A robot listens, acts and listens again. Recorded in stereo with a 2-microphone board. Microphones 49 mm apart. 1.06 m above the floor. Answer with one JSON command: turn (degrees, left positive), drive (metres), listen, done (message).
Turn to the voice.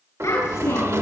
{"turn": 90}
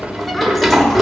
{"listen": true}
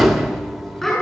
{"turn": 10}
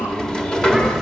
{"listen": true}
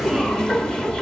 {"listen": true}
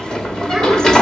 {"done": "I heard a child speaking from this way, but can't make it out now."}